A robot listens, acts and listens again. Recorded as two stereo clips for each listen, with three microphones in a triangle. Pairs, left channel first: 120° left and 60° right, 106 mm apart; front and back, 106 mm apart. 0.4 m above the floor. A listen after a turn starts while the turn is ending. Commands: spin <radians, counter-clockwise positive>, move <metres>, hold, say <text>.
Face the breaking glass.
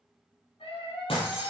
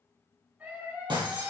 spin 2.44
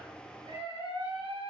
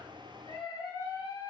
say Facing where the breaking glass came from. I can't hear it now.